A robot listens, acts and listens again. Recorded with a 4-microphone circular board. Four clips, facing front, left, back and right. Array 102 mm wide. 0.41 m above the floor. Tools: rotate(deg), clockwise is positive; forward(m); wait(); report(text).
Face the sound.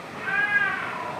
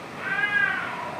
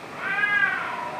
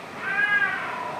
rotate(165)
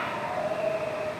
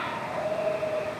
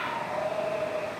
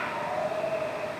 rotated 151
rotate(30)
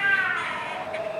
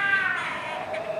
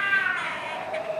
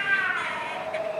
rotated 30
rotate(10)
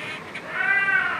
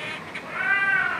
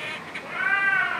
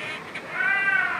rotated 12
report("Facing the cat meowing.")